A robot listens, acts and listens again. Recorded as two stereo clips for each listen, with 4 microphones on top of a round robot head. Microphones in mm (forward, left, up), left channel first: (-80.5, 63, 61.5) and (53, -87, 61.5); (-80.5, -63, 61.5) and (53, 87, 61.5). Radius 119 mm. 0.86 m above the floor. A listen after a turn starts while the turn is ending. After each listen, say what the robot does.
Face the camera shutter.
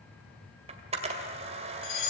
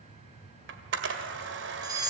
Turn 15° left.
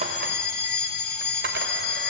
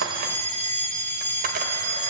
Keep listening.
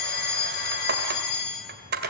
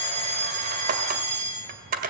Found it: a camera shutter, straight ahead.